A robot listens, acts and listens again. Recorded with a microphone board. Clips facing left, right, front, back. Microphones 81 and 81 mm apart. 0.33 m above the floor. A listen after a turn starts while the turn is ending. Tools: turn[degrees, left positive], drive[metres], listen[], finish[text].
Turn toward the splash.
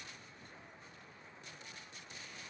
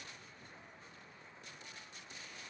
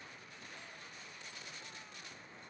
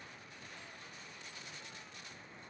Action: listen[]
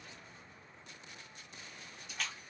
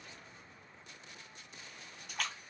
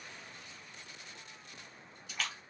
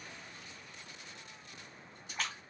Thought: The splash: 125° right.
Action: turn[-125]
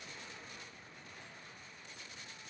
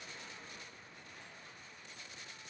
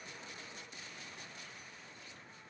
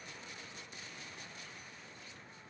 Action: finish[Facing where the splash came from. I can't hear it now.]